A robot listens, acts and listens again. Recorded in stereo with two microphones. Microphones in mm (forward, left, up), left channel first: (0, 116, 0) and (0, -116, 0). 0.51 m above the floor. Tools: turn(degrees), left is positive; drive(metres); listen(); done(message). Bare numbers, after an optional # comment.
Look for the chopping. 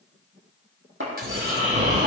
# The chopping: about 65° right or 115° right.
turn(-65)
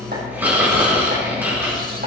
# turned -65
listen()
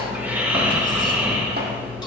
listen()
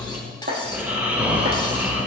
# So it is at 45° right.
turn(-45)
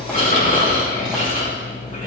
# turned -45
listen()
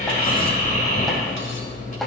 listen()
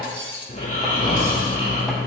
done("I heard chopping from this way, but can't make it out now.")